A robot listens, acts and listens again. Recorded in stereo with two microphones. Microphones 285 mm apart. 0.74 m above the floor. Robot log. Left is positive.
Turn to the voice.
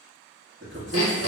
note: The man speaking: about 40° right or 140° right.
cmd yaw -40
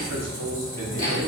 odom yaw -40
cmd idle
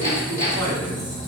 cmd idle
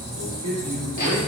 note: So it is at 90° right.
cmd yaw -90
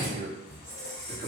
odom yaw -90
note: The man speaking is now 35° right.
cmd yaw -35
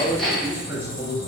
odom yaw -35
note: The man speaking is now 10° right.
cmd yaw -10
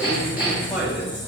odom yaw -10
cmd idle
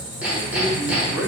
cmd idle
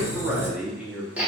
end: Facing the man speaking.